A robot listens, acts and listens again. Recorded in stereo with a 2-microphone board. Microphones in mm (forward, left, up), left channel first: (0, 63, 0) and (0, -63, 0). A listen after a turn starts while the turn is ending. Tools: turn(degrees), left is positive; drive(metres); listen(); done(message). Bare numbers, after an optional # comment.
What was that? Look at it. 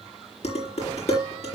# The dishes clattering: about 60° left or 120° left.
turn(60)
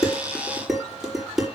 done("Facing the dishes clattering, over 4 m away.")